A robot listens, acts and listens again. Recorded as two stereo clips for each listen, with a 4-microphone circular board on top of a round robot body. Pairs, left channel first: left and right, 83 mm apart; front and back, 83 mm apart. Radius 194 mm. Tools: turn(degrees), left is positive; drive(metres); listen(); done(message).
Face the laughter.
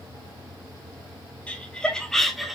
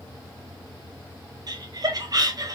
turn(degrees=-175)
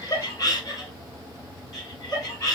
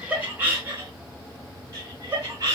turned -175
turn(degrees=130)
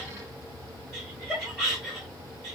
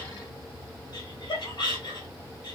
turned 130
done("Found it: laughter, straight ahead, 2 to 4 m away.")